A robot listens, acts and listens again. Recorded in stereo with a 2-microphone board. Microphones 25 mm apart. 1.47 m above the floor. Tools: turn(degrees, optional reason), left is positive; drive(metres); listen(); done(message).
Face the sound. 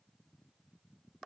listen()
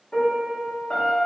turn(degrees=50, reason="The piano: about 50° left or 130° left.")
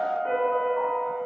turn(degrees=10, reason="So it is at 10° left.")
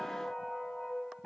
done("Facing the piano, under 1 m away.")